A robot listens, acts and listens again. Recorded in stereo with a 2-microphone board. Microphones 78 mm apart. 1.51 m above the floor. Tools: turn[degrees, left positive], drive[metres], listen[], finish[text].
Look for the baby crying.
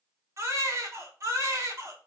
Thought: The baby crying: about 40° right or 140° right.
Action: turn[-40]
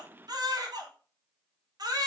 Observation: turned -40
Thought: So it is at 95° right.
Action: turn[-95]
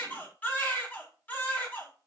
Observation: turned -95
Thought: The baby crying is now 25° left.
Action: turn[25]
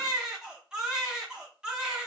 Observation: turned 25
Thought: The baby crying is now 10° right.
Action: turn[-10]
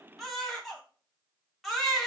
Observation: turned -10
Action: finish[Found it: a baby crying, straight ahead.]